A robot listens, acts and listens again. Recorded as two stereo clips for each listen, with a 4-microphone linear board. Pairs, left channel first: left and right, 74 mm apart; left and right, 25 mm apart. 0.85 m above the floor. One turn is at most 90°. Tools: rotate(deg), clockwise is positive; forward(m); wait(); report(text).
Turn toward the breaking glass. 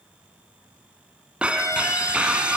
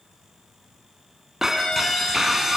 rotate(15)
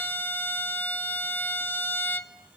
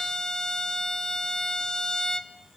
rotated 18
wait()
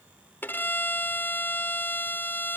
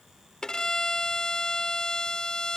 report("I heard breaking glass, but can't make it out now. It was about 5° left or 145° right.")